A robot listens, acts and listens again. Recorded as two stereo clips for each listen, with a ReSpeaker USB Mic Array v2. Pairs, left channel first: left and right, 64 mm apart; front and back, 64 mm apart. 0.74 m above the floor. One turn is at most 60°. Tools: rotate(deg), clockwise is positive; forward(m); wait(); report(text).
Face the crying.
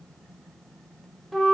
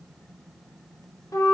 wait()
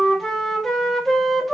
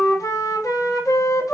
wait()
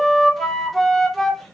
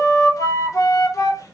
report("I can't make out crying to turn to.")